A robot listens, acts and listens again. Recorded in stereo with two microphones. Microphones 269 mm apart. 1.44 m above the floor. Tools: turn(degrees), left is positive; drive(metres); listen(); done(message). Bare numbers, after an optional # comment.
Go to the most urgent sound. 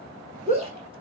# The shout: about 25° right or 155° right.
turn(-25)
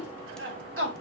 # So it is at 135° right.
turn(-135)
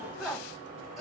drive(1.0)
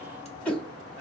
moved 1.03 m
drive(1.0)
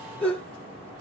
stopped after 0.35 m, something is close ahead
done("I am next to the shout.")